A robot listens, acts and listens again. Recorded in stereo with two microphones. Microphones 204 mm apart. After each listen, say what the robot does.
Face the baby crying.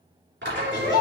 Turn 65° right.
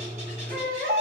Turn 50° right.
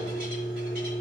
Keep listening.
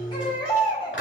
Turn 25° left.
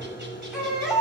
Found it: a baby crying, straight ahead, 1 to 2 m away.